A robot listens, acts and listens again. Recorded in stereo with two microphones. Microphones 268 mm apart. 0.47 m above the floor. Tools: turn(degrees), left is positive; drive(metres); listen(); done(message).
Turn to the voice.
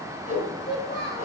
turn(degrees=60)
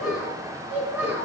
done("Found it: a child speaking, straight ahead, over 4 m away.")